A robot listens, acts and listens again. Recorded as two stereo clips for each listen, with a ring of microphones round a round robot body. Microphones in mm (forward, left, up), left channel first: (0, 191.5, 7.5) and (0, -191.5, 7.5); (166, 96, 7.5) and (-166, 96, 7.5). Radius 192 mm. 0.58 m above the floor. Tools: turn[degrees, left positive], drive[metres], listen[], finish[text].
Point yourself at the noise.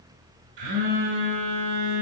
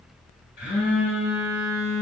Thought: The phone buzzing: 70° right.
Action: turn[-70]
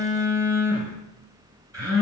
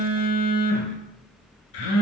Thought: The phone buzzing is now 10° right.
Action: turn[-10]
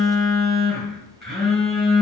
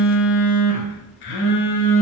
Action: finish[Found it: a phone buzzing, straight ahead, 1 to 2 m away.]